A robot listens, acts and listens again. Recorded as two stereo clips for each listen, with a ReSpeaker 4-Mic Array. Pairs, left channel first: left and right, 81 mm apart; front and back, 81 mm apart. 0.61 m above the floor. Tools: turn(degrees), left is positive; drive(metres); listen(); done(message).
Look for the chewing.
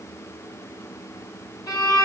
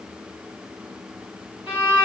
listen()
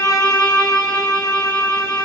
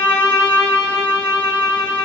listen()
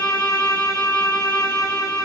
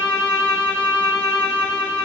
done("I can't make out chewing, only a violin.")